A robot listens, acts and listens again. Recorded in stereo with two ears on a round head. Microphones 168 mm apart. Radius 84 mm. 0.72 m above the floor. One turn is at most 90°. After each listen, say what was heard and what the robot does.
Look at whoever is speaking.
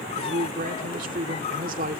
The man speaking: about 45° right or 135° right. Turn 45° right.
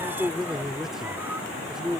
Facing the man speaking.